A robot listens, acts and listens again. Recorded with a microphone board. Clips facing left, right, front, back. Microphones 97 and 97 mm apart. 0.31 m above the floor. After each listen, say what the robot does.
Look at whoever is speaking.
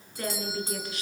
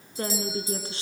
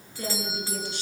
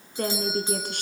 Turn 150° right.
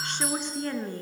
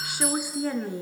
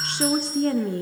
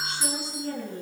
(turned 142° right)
Facing the woman speaking.